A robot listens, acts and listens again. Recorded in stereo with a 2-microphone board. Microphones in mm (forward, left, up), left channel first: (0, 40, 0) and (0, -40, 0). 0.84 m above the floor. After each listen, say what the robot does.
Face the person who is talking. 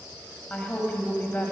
Turn 20° left.
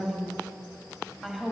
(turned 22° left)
Found it: a woman speaking, straight ahead.